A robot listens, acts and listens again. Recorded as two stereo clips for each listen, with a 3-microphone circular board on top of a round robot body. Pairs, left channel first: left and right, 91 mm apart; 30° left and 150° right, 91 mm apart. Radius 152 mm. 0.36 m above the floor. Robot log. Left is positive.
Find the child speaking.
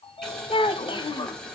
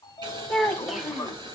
note: The child speaking: 125° left.
cmd yaw +125
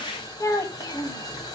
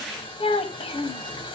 note: The child speaking is now 45° left.
cmd yaw +45
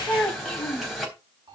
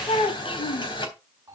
note: The child speaking is now 10° left.
cmd yaw +10
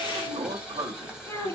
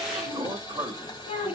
note: The child speaking is now 15° left.
cmd yaw +15
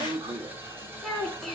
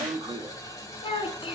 end: Facing the child speaking.